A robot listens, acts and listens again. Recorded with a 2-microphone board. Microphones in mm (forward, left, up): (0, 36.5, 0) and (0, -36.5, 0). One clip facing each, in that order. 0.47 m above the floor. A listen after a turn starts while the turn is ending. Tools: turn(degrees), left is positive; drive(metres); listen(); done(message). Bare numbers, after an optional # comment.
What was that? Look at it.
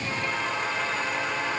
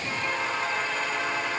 listen()
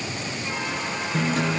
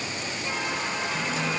# The guitar: about 55° left or 125° left.
turn(55)
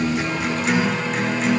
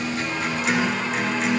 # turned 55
done("Facing the guitar, 1 to 2 m away.")